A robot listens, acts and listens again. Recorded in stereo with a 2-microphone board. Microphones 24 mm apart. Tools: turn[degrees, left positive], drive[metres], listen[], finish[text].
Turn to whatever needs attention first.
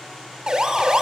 Thought: The siren: about 35° right or 145° right.
Action: turn[-35]
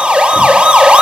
Thought: So it is at 105° right.
Action: turn[-105]
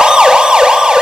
Thought: The siren is now 50° right.
Action: turn[-50]
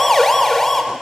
Thought: The siren is now 20° left.
Action: turn[20]
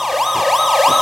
Action: finish[Found it: a siren, straight ahead, 2 to 4 m away.]